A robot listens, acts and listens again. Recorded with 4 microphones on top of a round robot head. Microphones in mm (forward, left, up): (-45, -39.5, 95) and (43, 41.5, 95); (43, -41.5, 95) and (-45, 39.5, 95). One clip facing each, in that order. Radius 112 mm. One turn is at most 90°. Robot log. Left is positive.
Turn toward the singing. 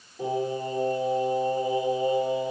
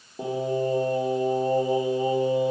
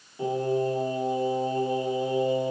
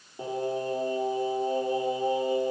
note: The singing: 80° left.
cmd yaw +80
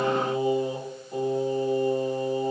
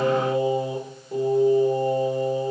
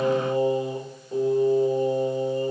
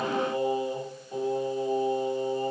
note: The singing is now 15° left.
cmd yaw +15
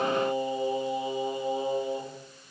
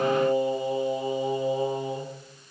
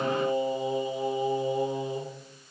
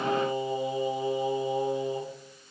note: The singing is now 10° left.
cmd yaw +10
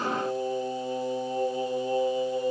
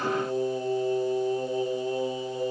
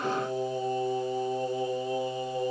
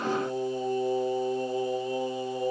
end: Found it: singing, straight ahead, over 4 m away.